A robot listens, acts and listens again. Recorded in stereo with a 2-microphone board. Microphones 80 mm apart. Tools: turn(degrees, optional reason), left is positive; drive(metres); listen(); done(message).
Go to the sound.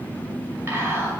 turn(degrees=-35, reason="The whispering: about 35° right or 145° right.")
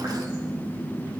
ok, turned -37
listen()
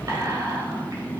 turn(degrees=-105, reason="So it is at 105° right.")
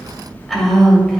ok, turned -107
drive(metres=1.0)
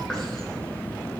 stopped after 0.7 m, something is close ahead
listen()
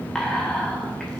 turn(degrees=10, reason="The whispering is now 10° left.")
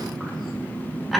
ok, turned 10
done("Arrived at the whispering, straight ahead.")